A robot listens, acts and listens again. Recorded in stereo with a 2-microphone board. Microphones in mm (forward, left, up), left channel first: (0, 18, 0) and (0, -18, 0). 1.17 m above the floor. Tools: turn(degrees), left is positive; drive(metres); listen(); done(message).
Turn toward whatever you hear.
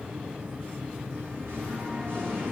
turn(degrees=-90)
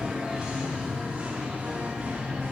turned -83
turn(degrees=-35)
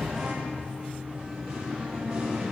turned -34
turn(degrees=-15)
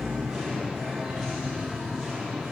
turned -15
done("Found it: singing, straight ahead.")